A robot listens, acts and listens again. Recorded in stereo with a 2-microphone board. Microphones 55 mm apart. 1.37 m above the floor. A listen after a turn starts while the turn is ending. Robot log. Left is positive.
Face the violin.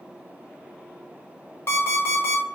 cmd idle
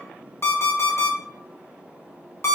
cmd idle
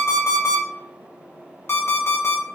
end: I can't make out a violin, only an alarm clock.